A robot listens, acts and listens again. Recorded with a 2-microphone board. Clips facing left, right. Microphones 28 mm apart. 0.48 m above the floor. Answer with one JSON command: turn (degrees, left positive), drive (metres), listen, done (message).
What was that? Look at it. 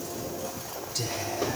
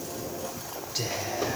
{"turn": -25}
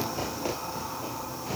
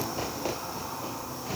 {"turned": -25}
{"done": "Facing the whispering, 1 to 2 m away."}